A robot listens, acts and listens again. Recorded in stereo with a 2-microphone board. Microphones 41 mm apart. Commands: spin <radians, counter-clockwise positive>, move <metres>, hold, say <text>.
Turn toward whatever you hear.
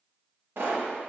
spin -1.13
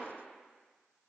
hold
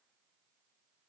say I heard a pop, but can't make it out now. It was about straight ahead or 50° right.